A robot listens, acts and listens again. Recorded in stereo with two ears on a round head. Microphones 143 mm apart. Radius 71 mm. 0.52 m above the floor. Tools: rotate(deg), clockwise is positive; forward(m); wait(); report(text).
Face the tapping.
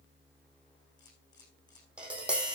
rotate(30)
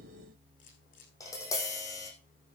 rotate(-20)
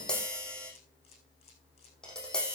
report("Facing the tapping, over 4 m away.")